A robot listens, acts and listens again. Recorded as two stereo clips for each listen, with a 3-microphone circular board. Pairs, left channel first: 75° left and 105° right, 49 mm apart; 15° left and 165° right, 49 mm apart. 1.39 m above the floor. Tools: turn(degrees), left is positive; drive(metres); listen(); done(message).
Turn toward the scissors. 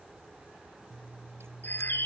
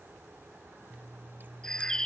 turn(degrees=-120)
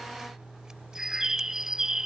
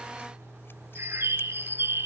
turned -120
turn(degrees=-25)
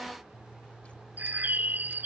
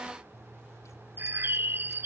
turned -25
turn(degrees=10)
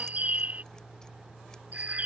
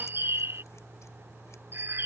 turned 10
done("Facing the scissors.")